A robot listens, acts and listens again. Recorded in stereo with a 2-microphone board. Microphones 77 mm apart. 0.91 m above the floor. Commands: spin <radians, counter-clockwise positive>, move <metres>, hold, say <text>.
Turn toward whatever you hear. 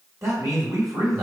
spin -0.79
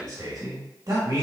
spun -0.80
spin -1.40
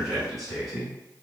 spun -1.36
say Facing the man speaking.